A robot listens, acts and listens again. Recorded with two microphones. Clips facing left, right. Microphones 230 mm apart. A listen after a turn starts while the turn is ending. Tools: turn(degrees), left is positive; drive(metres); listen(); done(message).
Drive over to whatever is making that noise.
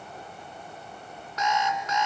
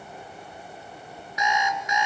turn(degrees=-30)
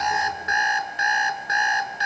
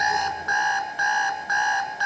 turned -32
turn(degrees=20)
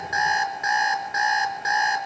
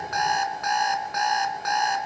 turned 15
drive(metres=1.0)
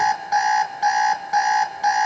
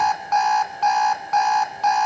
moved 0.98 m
turn(degrees=10)
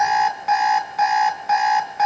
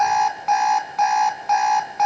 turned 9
drive(metres=1.0)
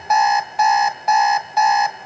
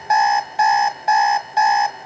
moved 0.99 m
drive(metres=1.0)
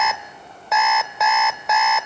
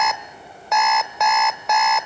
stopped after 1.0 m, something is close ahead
done("Arrived at the alarm clock, straight ahead.")